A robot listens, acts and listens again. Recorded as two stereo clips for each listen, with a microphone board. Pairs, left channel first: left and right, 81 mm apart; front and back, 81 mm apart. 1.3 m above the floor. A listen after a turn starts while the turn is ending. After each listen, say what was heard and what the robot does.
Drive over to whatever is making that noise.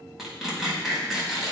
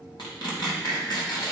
Drive 1.0 m forward.
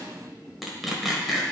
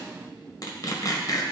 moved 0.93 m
Drive 1.0 m forward.
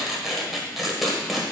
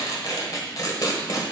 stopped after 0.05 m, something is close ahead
I am next to the tearing paper.